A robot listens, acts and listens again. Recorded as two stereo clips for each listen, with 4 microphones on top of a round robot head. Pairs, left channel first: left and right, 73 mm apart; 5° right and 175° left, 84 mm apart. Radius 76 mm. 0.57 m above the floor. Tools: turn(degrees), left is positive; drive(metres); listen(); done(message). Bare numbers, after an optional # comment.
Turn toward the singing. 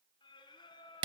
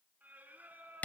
# The singing: 105° left.
turn(105)
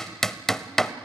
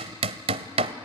listen()
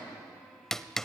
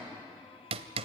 listen()
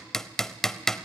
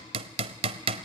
done("I heard singing from this way, but can't make it out now.")